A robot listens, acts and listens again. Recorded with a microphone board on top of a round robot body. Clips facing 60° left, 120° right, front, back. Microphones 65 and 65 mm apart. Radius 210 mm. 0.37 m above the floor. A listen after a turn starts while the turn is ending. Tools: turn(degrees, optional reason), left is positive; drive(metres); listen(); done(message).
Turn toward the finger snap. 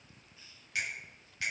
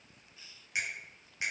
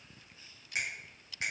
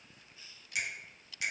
turn(degrees=-50, reason="The finger snap: 50° right.")
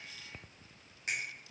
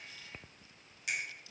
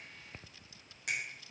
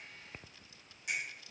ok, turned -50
turn(degrees=10, reason="The finger snap is now 10° left.")
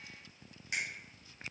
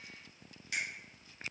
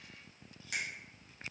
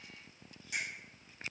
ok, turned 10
done("Facing the finger snap.")